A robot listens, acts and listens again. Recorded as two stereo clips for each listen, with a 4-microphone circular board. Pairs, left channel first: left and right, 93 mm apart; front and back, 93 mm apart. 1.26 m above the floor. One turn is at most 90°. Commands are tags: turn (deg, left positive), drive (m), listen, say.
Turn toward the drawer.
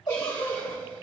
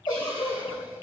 <listen/>
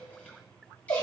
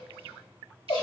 <listen/>
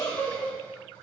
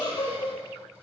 <say>I can't make out a drawer to turn to.</say>